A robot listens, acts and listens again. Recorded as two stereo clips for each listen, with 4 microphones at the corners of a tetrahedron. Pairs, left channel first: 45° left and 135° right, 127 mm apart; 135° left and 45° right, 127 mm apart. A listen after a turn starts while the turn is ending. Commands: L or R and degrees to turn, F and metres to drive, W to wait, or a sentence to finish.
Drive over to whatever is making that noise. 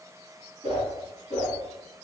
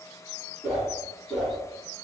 R130
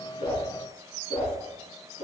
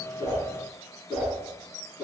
L30
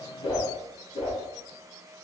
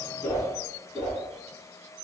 F1.0
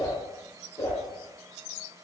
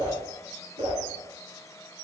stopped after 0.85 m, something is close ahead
R10
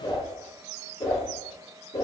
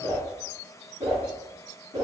I am next to the whoosh.